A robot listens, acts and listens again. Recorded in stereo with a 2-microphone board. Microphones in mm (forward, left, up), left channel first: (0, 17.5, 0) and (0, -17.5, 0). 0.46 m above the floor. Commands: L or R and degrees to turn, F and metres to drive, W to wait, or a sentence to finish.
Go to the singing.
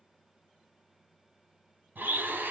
W
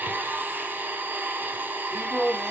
L30
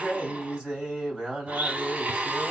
R30
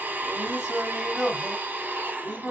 R10
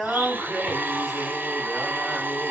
F1.0
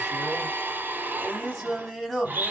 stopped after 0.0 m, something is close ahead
Something is in my way. I am facing the singing but have not reached it.